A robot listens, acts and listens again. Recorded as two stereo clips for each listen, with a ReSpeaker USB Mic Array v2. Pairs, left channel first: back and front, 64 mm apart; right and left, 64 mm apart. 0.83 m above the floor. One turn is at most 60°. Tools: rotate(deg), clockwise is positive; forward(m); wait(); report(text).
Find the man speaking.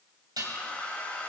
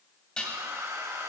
wait()
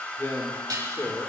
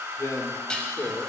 rotate(60)
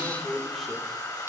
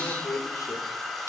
rotate(60)
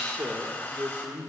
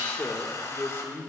rotate(55)
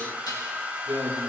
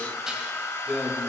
report("Facing the man speaking.")